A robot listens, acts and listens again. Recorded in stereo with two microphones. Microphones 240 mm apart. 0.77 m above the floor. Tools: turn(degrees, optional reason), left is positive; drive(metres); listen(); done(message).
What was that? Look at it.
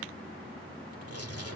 turn(degrees=-90)
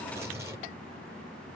turn(degrees=-10, reason="So it is at 10° right.")
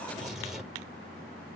done("Found it: tearing paper, straight ahead, over 4 m away.")